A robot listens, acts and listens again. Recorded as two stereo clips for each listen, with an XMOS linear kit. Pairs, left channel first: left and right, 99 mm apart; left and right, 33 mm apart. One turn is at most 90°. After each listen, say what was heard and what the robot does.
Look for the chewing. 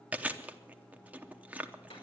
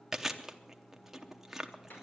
Turn 30° right.
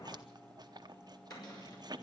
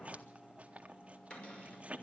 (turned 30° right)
So it is at 140° right. Turn 90° right.
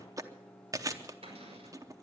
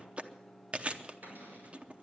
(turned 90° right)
The chewing is now 35° right. Turn 35° right.
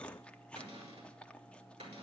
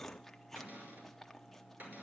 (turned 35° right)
The chewing is now 10° left. Turn 10° left.
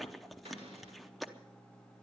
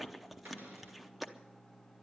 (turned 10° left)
Facing the chewing, under 1 m away.